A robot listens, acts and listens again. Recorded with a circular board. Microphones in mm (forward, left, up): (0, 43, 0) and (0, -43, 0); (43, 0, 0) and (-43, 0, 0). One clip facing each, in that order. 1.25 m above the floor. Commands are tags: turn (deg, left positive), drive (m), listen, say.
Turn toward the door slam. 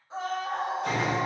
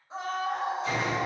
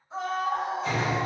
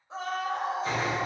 <turn deg="125"/>
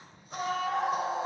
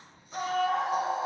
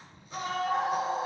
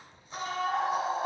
<say>Facing where the door slam came from. I can't hear it now.</say>